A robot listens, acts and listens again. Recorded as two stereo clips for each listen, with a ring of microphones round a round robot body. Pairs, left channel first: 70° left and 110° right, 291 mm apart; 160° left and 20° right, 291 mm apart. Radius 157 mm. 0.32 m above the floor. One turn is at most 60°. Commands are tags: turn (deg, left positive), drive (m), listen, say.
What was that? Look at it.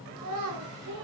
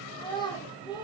<turn deg="-60"/>
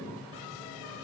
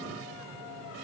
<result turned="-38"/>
<turn deg="-60"/>
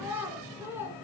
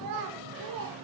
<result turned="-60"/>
<turn deg="-30"/>
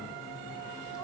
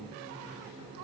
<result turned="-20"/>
<turn deg="-10"/>
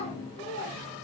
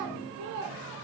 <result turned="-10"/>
<say>Found it: a child speaking, straight ahead.</say>